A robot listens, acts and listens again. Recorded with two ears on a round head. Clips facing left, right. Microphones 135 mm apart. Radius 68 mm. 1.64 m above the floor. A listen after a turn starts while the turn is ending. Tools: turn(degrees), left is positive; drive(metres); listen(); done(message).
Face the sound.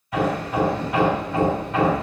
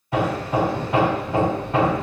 turn(degrees=-25)
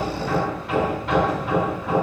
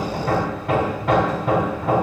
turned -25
turn(degrees=-125)
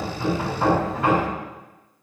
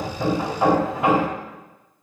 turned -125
turn(degrees=-20)
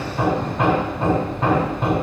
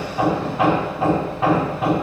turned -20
done("Facing the hammering, 2 to 4 m away.")